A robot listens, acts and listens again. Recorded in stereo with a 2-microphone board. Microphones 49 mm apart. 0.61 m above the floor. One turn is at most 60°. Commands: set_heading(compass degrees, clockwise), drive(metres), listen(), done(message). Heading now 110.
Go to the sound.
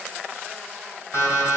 set_heading(50)
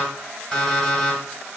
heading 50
set_heading(35)
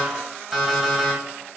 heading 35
drive(1.0)
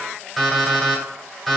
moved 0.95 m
drive(1.0)
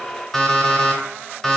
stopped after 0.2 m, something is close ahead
set_heading(25)
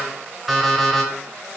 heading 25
done("I am next to the alarm clock.")